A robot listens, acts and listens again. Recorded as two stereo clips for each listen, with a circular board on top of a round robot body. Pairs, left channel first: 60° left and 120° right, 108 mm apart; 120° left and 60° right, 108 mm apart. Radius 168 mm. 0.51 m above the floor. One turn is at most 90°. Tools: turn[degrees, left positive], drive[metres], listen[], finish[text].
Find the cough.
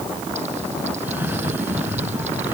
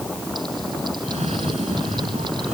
Thought: The cough: 45° right.
Action: turn[-45]
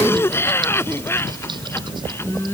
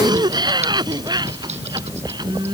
Thought: The cough is now 10° right.
Action: turn[-10]
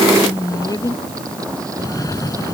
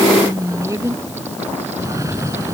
Action: finish[Found it: a cough, straight ahead.]